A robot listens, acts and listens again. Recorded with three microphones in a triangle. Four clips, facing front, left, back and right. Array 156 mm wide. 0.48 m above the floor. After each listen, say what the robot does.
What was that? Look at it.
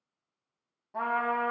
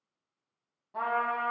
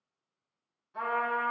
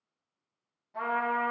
Turn 25° left.
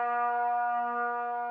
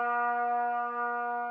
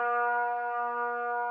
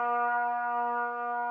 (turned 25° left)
Found it: a trumpet, straight ahead.